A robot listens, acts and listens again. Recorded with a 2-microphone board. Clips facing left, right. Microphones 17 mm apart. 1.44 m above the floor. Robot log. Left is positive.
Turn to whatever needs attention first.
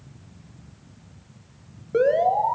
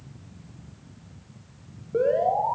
note: The alarm: about 65° left or 115° left.
cmd yaw +65
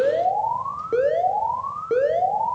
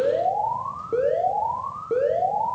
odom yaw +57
note: So it is at 45° left.
cmd yaw +45
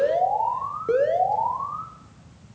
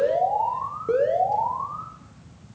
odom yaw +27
note: The alarm is now 20° left.
cmd yaw +20
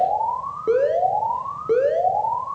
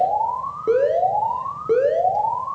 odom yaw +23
end: Facing the alarm, 2 to 4 m away.